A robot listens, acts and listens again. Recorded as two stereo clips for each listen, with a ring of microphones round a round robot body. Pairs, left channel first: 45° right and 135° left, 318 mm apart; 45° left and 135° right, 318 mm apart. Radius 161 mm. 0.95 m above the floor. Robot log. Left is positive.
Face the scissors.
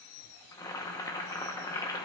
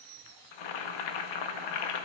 cmd idle
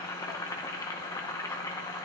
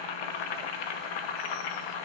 cmd idle
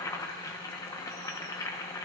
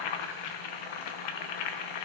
end: I can't make out scissors to turn to.